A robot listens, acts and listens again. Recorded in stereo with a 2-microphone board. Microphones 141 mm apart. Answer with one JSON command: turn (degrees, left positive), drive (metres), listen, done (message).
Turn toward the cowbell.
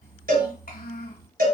{"turn": -70}
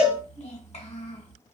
{"done": "Facing the cowbell."}